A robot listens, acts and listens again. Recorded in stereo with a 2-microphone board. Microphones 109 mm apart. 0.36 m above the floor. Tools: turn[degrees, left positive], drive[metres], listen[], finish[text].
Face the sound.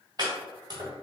Thought: The chopping: about 40° right or 140° right.
Action: turn[-40]
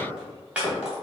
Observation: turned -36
Thought: So it is at 10° right.
Action: turn[-10]
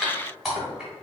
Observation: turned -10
Action: finish[Found it: chopping, straight ahead.]